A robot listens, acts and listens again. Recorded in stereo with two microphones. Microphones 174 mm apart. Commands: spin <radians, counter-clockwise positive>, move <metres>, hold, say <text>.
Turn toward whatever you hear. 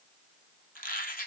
spin 0.96
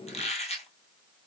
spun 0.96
spin 0.79
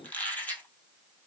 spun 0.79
spin 0.17
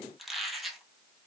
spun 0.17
say Facing the squeak, 1 to 2 m away.